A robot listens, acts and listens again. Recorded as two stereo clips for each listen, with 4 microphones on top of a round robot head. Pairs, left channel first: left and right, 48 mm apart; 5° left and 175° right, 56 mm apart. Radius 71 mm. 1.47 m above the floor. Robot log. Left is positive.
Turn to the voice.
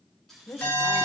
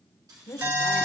note: The woman speaking: 45° left.
cmd yaw +45
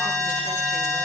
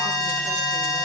cmd idle
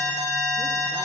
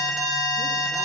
cmd idle
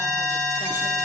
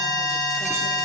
end: I heard a woman speaking from this way, but can't make it out now.